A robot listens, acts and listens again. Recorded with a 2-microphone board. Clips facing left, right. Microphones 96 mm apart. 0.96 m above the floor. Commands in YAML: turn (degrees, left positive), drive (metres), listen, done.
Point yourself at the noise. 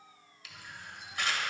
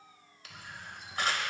turn: -40
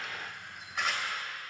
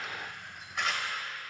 done: "Found it: a camera shutter, straight ahead, 1 to 2 m away."